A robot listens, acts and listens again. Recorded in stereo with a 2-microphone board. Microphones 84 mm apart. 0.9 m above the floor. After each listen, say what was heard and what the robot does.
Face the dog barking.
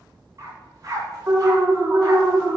The dog barking: about 45° right or 135° right. Turn 45° right.
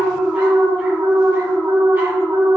Keep listening.
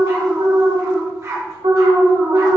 So it is at 35° right. Turn 35° right.
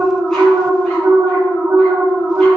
Keep listening.
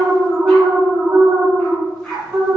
Facing the dog barking, 2 to 4 m away.